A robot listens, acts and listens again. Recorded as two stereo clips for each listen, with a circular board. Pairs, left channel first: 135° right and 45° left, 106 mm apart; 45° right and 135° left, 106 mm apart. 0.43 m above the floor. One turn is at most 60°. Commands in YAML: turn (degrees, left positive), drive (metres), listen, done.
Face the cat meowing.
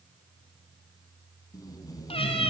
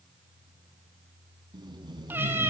turn: -60
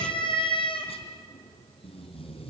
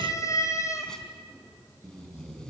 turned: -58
turn: -60
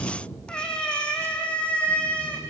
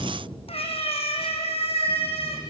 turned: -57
turn: -55
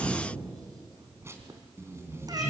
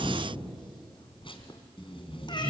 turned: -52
done: "Facing the cat meowing."